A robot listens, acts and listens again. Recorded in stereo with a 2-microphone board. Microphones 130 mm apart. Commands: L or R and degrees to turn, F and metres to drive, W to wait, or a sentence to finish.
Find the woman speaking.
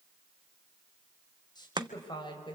L35
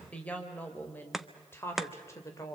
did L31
L25
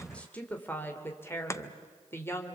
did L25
L15
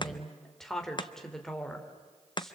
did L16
Facing the woman speaking, 2 to 4 m away.